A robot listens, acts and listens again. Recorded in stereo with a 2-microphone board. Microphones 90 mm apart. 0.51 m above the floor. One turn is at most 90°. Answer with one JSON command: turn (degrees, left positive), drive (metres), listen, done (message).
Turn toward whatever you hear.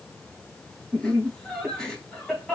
{"turn": 30}
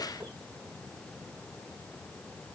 {"listen": true}
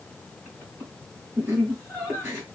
{"turn": -20}
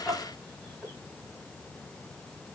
{"done": "Facing the laughter."}